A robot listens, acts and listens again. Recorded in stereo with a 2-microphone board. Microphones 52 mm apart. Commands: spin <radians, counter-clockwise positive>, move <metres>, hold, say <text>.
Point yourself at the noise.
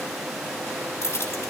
spin 1.13
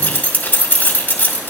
spin 0.70
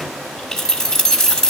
spin 0.17
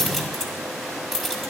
say Facing the keys jangling.